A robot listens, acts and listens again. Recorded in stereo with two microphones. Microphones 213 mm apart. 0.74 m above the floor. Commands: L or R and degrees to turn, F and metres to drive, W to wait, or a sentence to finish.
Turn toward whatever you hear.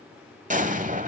R40
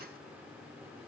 W
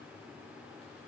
I heard an explosion, but can't make it out now. It was about straight ahead or 100° right.